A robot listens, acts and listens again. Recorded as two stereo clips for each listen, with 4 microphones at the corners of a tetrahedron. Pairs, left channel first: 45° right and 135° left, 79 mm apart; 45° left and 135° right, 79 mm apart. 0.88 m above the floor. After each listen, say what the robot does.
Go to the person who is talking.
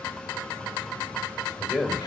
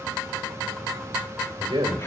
Turn 130° right.
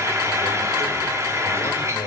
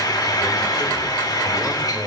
Keep listening.
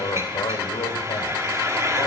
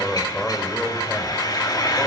Turn 35° right.
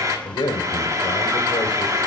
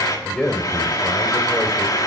Turn 30° right.
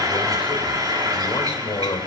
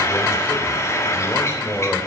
Turn 15° right.
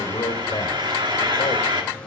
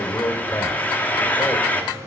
Drive 1.0 m forward.
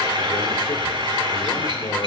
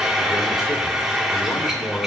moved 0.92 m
Keep listening.
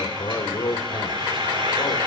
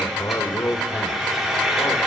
Drive 1.0 m forward.
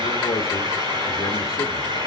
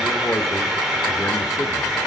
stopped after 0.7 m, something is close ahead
Keep listening.
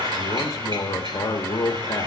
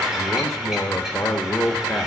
I am next to the man speaking.